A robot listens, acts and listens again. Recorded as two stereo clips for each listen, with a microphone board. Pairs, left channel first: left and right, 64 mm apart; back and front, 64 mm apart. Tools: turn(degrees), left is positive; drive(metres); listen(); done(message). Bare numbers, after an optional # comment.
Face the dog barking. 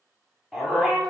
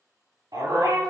done("Facing the dog barking.")